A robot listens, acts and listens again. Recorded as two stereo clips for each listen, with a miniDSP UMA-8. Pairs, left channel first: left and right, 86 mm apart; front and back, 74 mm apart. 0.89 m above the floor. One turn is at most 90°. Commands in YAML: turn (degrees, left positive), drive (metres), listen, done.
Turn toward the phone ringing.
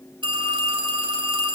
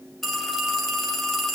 turn: -85
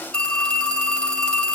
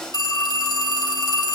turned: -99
turn: 15
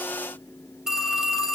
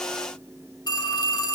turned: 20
done: "Facing the phone ringing."